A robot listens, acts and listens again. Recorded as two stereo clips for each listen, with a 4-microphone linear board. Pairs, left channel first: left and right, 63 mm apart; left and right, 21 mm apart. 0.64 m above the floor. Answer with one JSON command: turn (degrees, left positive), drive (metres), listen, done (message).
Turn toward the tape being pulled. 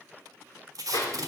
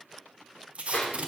{"turn": -65}
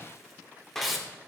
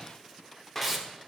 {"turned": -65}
{"done": "Found it: tape being pulled, straight ahead, under 1 m away."}